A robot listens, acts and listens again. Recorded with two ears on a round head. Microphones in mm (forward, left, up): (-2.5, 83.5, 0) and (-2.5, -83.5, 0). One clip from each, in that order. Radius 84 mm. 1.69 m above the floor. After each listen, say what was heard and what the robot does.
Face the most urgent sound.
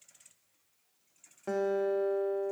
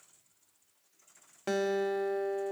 Keep listening.
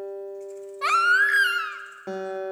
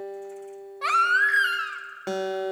The baby crying: about 15° left or 165° left. Turn 15° left.
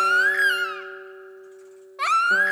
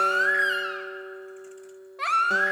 So it is at 150° left. Turn 150° left.
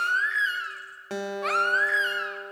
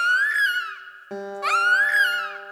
The baby crying is now 25° right. Turn 25° right.
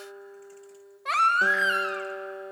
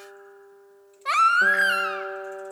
The baby crying is now 15° right. Turn 15° right.
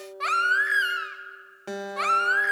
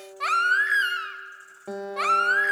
Facing the baby crying.